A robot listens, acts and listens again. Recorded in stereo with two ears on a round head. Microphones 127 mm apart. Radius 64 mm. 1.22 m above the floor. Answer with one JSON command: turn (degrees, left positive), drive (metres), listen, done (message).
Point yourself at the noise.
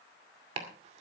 {"turn": -50}
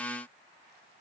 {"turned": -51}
{"listen": true}
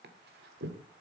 {"turn": -80}
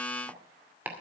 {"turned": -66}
{"turn": -15}
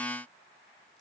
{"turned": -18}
{"listen": true}
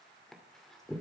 {"done": "Facing the chopping, 2 to 4 m away."}